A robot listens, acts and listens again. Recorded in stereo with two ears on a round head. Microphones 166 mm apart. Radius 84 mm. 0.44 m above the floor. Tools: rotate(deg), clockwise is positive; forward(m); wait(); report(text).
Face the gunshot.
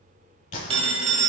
rotate(-40)
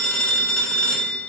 wait()
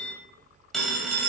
report("I heard a gunshot, but can't make it out now. It was about straight ahead or 100° left.")